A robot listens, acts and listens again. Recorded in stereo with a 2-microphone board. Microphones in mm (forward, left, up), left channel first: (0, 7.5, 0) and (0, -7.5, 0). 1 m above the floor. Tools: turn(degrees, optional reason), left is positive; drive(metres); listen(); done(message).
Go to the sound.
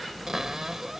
turn(degrees=-30, reason="The cupboard door: about 30° right or 150° right.")
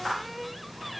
drive(metres=1.0)
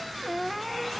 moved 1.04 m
drive(metres=1.0)
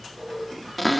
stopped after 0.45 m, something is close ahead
done("Arrived at the cupboard door, straight ahead.")